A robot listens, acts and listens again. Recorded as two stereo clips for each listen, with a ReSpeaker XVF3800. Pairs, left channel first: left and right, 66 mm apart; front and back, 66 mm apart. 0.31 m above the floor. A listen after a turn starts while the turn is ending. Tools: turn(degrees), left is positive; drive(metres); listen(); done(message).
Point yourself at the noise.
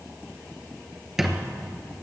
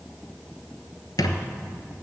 done("Found it: a squeak, straight ahead.")